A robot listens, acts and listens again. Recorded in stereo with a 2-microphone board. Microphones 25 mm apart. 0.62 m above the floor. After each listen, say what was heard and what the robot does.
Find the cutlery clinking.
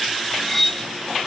Turn 30° left.
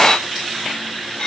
So it is at 135° left. Turn 135° left.
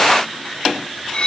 The cutlery clinking is now 40° left. Turn 40° left.
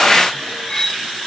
The cutlery clinking is now 20° left. Turn 20° left.
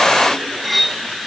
Facing the cutlery clinking, under 1 m away.